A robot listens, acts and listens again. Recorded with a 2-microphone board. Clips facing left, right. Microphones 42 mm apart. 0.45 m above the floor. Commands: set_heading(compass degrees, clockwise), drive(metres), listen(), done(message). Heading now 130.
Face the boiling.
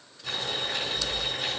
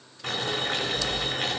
set_heading(190)
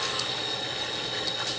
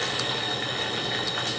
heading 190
set_heading(245)
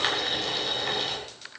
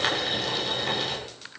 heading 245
done("Facing the boiling, over 4 m away.")